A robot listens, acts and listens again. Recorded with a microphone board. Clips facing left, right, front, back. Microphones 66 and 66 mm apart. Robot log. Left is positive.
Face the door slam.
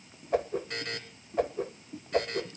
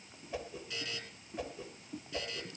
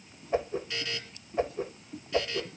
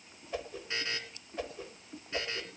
cmd idle
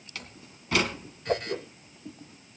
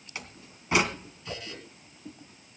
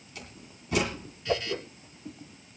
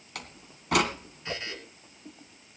note: The door slam: 160° right.
cmd yaw -160
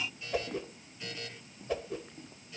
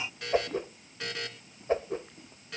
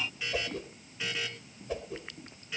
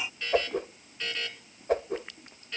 end: I heard a door slam from this way, but can't make it out now.